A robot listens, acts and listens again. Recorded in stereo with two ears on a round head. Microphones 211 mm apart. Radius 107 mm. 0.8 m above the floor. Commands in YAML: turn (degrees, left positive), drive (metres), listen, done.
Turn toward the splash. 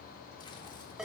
listen: true
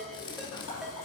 turn: 70
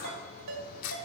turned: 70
listen: true
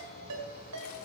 done: "I heard a splash, but can't make it out now. It was about straight ahead or 40° left."